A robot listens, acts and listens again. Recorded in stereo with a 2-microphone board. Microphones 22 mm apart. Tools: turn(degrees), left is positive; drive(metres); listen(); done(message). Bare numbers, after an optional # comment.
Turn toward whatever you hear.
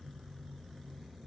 listen()
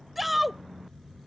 turn(-30)
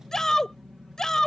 # So it is at 30° left.
turn(30)
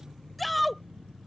done("Facing the shout.")